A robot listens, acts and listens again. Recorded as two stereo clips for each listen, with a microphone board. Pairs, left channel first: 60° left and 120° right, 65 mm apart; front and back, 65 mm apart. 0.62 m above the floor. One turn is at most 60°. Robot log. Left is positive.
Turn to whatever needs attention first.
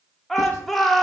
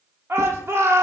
note: The shout: 145° left.
cmd yaw +60
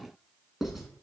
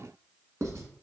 note: Nothing new. It was at 85° left.
cmd yaw +60
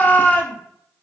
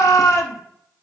end: Facing the shout.